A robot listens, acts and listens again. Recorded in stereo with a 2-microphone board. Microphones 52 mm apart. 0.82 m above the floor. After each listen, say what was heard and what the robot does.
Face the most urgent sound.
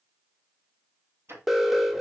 Turn 30° right.
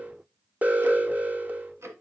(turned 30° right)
So it is at 140° right. Turn 140° right.
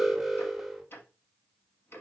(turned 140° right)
Facing the alarm.